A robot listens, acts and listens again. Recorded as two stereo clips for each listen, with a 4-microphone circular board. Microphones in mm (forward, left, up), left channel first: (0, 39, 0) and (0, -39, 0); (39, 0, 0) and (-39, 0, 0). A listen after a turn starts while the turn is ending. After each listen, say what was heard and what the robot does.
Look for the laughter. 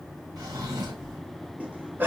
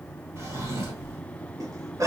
The laughter: 150° right. Turn 150° right.
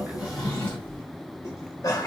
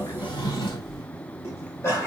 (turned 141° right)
The laughter is now 50° left. Turn 50° left.
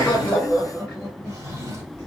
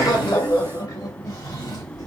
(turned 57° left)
Facing the laughter.